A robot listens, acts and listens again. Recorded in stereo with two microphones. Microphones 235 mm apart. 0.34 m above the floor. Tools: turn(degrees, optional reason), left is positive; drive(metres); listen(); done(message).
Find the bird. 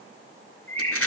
turn(degrees=30)
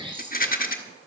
turn(degrees=-20, reason="So it is at 20° right.")
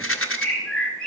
done("Facing the bird, 2 to 4 m away.")